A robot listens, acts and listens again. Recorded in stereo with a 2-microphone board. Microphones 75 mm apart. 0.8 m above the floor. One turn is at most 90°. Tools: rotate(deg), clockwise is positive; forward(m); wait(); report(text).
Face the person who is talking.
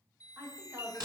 rotate(35)
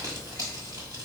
wait()
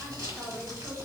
wait()
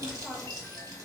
report("I heard a woman speaking, but can't make it out now. It was about straight ahead or 110° right.")